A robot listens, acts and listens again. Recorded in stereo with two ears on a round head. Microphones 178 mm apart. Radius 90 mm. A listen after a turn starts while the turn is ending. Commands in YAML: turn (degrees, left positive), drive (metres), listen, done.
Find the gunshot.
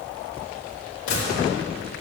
turn: 70
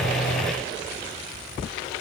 listen: true
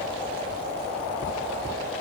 done: "I heard a gunshot, but can't make it out now. It was about straight ahead or 40° left."